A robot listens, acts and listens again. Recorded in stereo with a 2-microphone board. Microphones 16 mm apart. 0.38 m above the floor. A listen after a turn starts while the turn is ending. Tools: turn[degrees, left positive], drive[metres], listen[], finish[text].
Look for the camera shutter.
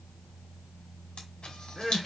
Thought: The camera shutter: about 70° left or 110° left.
Action: turn[70]
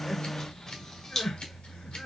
Thought: So it is at 25° left.
Action: turn[25]
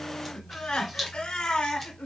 Thought: The camera shutter is now 10° right.
Action: turn[-10]
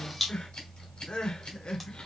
Action: finish[Found it: a camera shutter, straight ahead.]